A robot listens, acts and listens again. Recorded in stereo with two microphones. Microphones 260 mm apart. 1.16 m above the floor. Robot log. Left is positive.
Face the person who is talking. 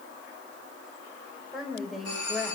cmd yaw +30
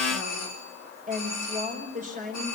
note: So it is at 30° right.
cmd yaw -30
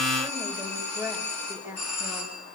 end: Facing the woman speaking.